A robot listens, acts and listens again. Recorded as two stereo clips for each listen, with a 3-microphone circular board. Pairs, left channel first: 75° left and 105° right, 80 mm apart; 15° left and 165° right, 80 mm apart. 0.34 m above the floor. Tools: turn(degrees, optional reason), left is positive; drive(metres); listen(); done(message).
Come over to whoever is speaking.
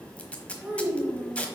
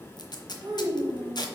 turn(degrees=180, reason="The child speaking: straight behind.")
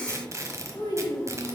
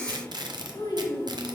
turn(degrees=30, reason="The child speaking is now 30° left.")
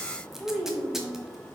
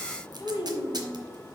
turn(degrees=-10, reason="The child speaking is now 10° right.")
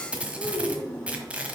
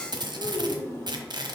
drive(metres=1.0)
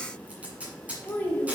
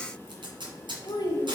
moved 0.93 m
turn(degrees=10, reason="The child speaking is now 10° left.")
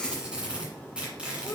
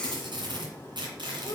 listen()
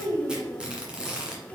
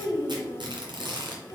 drive(metres=1.0)
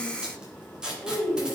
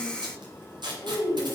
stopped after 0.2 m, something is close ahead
done("I am next to the child speaking.")